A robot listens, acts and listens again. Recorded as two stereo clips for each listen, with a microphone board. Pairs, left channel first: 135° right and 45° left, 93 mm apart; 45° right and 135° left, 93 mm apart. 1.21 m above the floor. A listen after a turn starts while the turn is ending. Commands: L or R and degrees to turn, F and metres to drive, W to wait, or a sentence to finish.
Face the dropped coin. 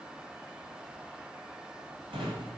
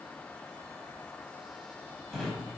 W
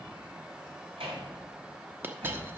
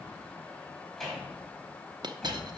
L105
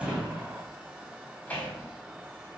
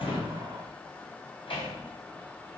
I heard a dropped coin from this way, but can't make it out now.